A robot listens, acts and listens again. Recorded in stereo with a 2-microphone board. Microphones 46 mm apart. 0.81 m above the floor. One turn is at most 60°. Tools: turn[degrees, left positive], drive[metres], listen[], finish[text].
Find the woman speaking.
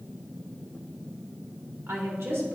Thought: The woman speaking: about 70° right or 110° right.
Action: turn[-60]
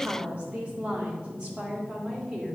Thought: So it is at 15° right.
Action: turn[-15]
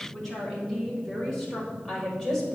Thought: The woman speaking is now 10° left.
Action: turn[10]
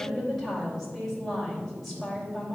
Action: finish[Found it: a woman speaking, straight ahead, 2 to 4 m away.]